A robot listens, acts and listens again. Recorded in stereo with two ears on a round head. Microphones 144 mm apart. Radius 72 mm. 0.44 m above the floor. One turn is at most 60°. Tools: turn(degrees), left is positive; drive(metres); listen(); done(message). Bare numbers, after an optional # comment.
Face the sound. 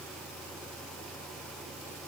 listen()
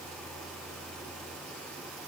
listen()
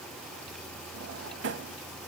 turn(-60)
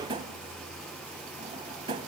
# So it is at 30° right.
turn(-30)
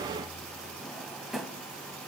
done("Found it: a drawer, straight ahead.")